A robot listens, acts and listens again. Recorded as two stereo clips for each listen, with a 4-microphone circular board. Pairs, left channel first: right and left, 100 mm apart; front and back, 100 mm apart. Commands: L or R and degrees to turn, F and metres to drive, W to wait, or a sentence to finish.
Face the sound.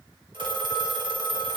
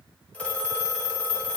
L75
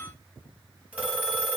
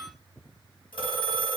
L15
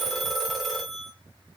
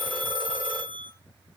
Found it: a phone ringing, straight ahead.